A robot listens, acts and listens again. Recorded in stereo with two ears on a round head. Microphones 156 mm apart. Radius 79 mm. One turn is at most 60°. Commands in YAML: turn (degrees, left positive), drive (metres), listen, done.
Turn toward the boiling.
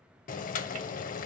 turn: 45
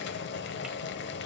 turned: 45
turn: 60
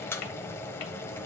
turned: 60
turn: 15
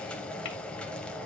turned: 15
done: "Found it: boiling, straight ahead."